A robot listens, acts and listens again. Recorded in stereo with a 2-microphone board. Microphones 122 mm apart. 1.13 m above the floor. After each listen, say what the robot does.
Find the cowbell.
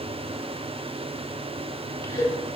Turn 40° left.
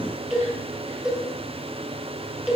Facing the cowbell, 1 to 2 m away.